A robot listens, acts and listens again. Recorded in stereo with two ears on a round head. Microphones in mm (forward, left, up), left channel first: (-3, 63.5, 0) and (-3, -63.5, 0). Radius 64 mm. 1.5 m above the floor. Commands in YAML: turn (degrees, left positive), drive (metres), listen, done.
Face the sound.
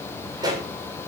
turn: -30
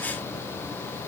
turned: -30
listen: true
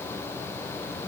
done: "I heard a pop, but can't make it out now. It was about straight ahead or 120° right."